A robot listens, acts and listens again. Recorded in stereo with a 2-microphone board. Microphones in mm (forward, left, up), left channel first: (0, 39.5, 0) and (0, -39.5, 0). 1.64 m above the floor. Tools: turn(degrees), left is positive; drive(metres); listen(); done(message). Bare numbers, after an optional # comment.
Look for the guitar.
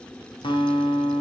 turn(90)
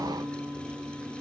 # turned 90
done("Found it: a guitar, straight ahead.")